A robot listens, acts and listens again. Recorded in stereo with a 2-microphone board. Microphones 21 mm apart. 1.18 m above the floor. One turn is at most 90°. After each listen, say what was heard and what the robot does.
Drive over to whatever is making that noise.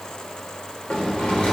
The sliding door: about 75° left or 105° left. Turn 75° left.
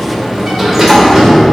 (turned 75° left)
Drive 1.0 m forward.
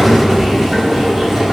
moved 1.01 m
Drive 1.0 m forward.
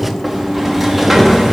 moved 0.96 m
Drive 1.0 m forward.
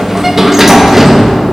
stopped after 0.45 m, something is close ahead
The sliding door is now 10° right. Turn 10° right.
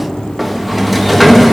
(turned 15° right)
I am next to the sliding door.